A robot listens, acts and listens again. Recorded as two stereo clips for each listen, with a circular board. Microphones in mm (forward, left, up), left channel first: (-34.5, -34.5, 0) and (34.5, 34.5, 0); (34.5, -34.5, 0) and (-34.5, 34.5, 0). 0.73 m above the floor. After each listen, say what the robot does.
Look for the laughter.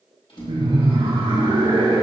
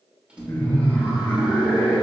Turn 25° left.
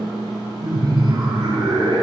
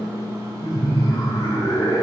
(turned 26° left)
Found it: laughter, straight ahead, 2 to 4 m away.